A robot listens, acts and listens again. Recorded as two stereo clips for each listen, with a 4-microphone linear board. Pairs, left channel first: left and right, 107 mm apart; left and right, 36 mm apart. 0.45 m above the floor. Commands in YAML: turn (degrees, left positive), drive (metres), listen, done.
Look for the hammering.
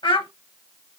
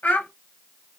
listen: true
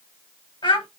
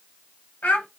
listen: true
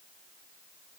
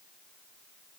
done: "I can't make out hammering, only a child speaking."